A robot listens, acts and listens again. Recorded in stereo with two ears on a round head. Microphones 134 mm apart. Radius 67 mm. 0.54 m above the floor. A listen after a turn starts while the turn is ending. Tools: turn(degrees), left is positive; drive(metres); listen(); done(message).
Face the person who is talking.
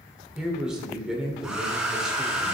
turn(degrees=-30)
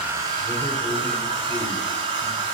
listen()
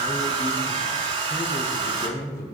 turn(degrees=25)
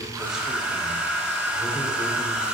listen()
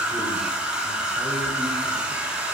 listen()
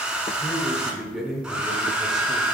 done("Found it: a man speaking, straight ahead.")